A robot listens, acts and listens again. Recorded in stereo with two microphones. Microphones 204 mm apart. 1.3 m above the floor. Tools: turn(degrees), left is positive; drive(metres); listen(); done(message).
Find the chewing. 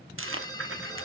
turn(degrees=-90)
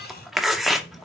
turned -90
done("Found it: chewing, straight ahead.")